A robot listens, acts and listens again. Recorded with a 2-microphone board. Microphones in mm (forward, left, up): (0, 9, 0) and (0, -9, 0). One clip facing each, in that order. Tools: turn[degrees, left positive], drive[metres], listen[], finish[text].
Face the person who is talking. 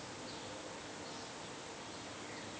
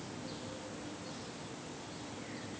Action: listen[]
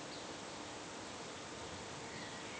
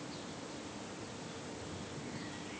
Action: listen[]
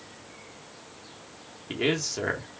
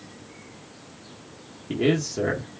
Thought: The man speaking: about 20° left or 160° left.
Action: turn[20]
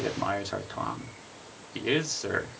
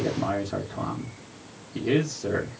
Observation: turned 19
Thought: So it is at 145° left.
Action: turn[145]
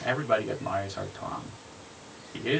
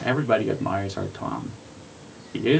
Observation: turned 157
Thought: The man speaking is now 20° right.
Action: turn[-20]
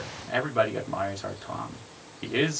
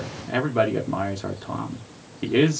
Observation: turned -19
Action: finish[Found it: a man speaking, straight ahead.]